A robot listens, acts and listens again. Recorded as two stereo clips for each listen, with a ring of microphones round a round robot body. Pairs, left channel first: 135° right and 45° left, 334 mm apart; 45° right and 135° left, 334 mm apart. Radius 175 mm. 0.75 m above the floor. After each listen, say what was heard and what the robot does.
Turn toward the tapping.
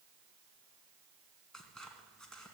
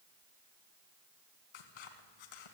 Keep listening.
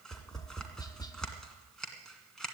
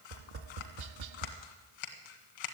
The tapping: 145° left. Turn 145° left.
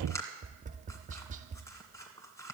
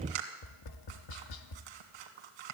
The tapping is now 25° right. Turn 25° right.
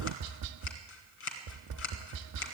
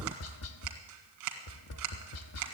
Facing the tapping.